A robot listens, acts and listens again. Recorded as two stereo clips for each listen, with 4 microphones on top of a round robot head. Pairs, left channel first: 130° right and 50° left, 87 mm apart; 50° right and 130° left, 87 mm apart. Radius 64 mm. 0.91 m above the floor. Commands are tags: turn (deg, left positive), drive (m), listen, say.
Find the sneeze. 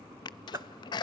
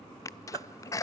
<turn deg="-100"/>
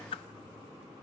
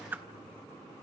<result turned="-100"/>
<say>Facing where the sneeze came from. I can't hear it now.</say>